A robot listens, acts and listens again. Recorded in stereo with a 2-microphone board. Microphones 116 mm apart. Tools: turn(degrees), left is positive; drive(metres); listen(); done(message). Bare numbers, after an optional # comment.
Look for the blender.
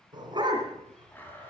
# The blender: about 15° left or 165° left.
turn(15)
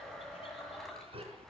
done("Found it: a blender, straight ahead, 2 to 4 m away.")